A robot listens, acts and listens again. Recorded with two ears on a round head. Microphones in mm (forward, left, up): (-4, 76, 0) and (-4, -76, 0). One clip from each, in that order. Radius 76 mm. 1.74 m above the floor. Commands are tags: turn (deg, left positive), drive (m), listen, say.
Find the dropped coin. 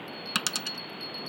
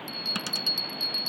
<turn deg="45"/>
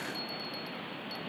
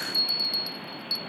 <listen/>
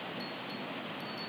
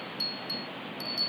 <say>I heard a dropped coin, but can't make it out now. It was about straight ahead or 90° left.</say>